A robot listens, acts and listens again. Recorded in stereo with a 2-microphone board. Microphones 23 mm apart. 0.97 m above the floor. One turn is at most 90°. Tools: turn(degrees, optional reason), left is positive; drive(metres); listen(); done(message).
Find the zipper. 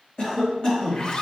turn(degrees=40, reason="The zipper: about 40° left or 140° left.")
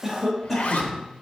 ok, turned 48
turn(degrees=90, reason="So it is at 90° left.")
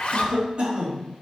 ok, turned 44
turn(degrees=50, reason="The zipper is now 50° left.")
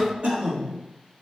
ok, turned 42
turn(degrees=10, reason="Nothing new. It was at 10° left.")
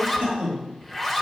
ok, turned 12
done("Facing the zipper.")